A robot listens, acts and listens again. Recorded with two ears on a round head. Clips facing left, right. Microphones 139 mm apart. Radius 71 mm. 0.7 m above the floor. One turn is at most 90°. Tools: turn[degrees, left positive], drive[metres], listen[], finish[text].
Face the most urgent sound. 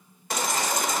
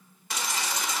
Thought: The baby crying: about 40° left or 140° left.
Action: turn[40]
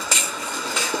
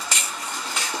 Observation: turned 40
Thought: So it is at 100° left.
Action: turn[90]
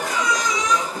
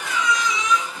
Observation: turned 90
Thought: The baby crying is now 35° left.
Action: turn[35]
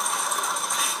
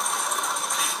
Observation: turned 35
Action: finish[Facing the baby crying.]